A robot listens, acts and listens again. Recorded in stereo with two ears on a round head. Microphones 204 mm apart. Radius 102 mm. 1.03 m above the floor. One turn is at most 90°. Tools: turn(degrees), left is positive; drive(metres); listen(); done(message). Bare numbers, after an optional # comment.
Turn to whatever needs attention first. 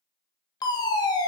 # The fire alarm: about 20° left or 160° left.
turn(20)
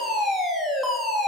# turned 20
done("Facing the fire alarm.")